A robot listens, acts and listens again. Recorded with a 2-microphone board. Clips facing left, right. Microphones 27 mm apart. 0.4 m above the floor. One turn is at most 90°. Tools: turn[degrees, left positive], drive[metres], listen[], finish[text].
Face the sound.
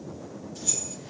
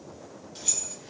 Thought: The keys jangling: about 55° right or 125° right.
Action: turn[-55]
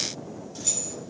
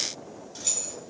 Thought: So it is at 10° right.
Action: turn[-10]
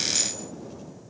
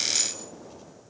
Action: listen[]
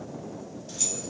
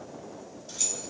Action: finish[Facing the keys jangling.]